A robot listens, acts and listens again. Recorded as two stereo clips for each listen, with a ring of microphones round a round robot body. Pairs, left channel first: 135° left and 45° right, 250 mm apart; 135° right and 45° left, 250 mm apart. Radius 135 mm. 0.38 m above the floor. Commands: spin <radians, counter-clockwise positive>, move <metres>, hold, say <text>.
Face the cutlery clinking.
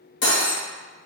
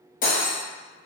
spin 2.97
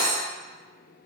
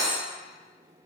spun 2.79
spin 0.17
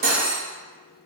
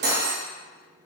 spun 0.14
say Found it: cutlery clinking, straight ahead, under 1 m away.